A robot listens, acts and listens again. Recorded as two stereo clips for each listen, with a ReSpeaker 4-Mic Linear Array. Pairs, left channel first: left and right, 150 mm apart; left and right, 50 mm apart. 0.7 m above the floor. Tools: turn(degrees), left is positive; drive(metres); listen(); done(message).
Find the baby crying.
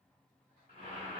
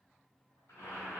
listen()
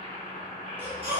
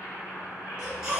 turn(degrees=-30)
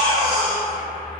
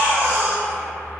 turn(degrees=-140)
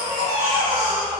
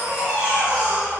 turn(degrees=-25)
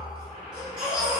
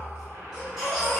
done("Found it: a baby crying, straight ahead.")